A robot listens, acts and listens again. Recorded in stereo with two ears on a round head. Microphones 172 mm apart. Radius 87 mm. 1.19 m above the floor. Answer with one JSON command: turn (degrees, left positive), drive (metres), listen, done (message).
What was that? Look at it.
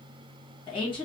{"turn": 25}
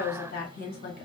{"turn": 125}
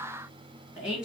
{"done": "Facing the woman speaking."}